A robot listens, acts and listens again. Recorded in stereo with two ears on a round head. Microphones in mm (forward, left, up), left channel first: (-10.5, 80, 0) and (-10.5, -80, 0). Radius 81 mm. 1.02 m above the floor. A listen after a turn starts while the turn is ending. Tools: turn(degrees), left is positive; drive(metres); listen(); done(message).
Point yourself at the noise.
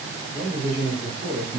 turn(degrees=-40)
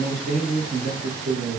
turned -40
turn(degrees=-40)
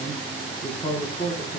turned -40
turn(degrees=20)
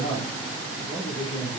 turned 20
turn(degrees=25)
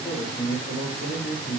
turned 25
done("Facing the man speaking, 1 to 2 m away.")